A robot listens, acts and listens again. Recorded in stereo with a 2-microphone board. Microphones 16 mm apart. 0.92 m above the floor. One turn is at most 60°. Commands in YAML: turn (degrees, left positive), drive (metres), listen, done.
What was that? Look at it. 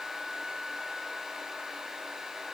listen: true
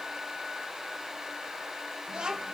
turn: -55
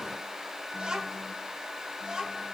turn: -55
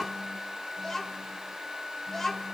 turn: 15
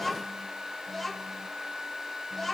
done: "Found it: a child speaking, straight ahead."